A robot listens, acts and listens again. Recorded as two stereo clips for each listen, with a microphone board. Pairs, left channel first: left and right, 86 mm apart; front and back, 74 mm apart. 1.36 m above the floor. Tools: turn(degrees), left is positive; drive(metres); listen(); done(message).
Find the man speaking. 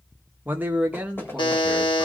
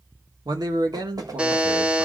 turn(degrees=-165)
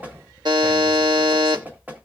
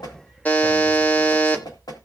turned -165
listen()
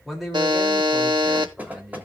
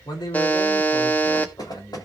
done("Facing the man speaking, 2 to 4 m away.")